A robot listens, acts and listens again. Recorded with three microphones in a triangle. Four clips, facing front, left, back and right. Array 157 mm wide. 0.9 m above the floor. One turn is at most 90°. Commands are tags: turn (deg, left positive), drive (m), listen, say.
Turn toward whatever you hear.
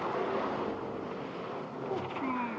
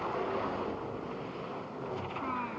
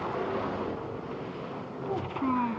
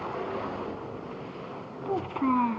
<turn deg="-90"/>
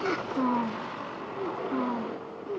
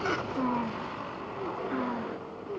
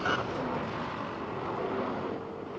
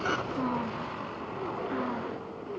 <turn deg="10"/>
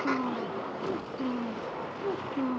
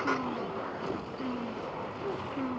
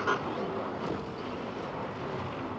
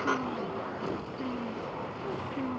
<listen/>
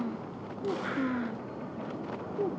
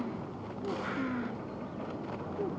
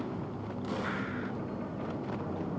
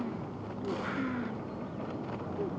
<listen/>
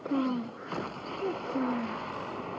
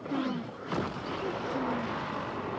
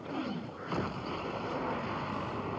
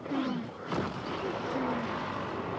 <say>Facing the child speaking.</say>